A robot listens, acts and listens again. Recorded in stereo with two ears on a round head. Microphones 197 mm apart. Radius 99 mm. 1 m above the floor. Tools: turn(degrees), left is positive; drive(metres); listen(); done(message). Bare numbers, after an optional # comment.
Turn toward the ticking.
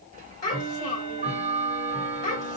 # The ticking: about 35° right or 145° right.
turn(-35)
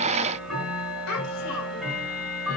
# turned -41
done("Facing the ticking, 1 to 2 m away.")